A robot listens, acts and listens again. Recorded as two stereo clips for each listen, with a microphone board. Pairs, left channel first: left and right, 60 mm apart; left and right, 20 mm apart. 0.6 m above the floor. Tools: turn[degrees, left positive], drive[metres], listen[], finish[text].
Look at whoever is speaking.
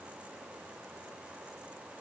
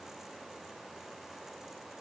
Action: listen[]
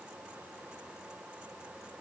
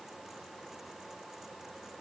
Action: listen[]
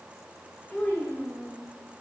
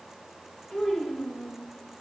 Thought: The child speaking: about 30° left or 150° left.
Action: turn[30]
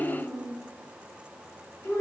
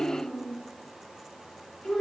Thought: So it is at 120° left.
Action: turn[120]
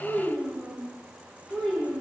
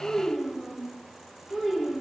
Thought: The child speaking is now 15° left.
Action: turn[15]
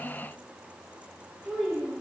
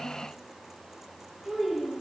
Action: finish[Found it: a child speaking, straight ahead, 2 to 4 m away.]